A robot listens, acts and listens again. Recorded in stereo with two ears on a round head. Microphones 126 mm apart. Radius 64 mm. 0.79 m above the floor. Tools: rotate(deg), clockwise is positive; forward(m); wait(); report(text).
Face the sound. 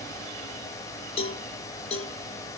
rotate(-35)
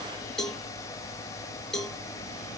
report("Facing the cowbell.")